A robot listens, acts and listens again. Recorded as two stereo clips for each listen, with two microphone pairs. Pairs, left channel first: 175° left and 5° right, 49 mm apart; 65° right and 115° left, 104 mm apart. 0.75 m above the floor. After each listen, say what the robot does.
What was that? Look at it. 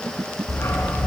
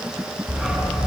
Turn 155° right.
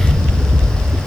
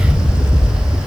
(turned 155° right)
Turn 35° right.
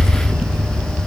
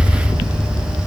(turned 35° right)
Turn 15° right.
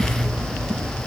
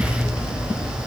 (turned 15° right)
Found it: a dog barking, straight ahead.